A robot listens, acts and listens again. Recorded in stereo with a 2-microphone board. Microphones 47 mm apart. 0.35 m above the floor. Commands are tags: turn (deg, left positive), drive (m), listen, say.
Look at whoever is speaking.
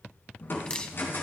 <listen/>
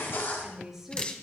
<turn deg="-30"/>
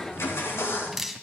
<listen/>
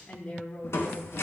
<turn deg="30"/>
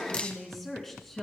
<turn deg="10"/>
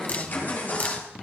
<listen/>
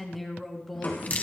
<say>Facing the woman speaking, 2 to 4 m away.</say>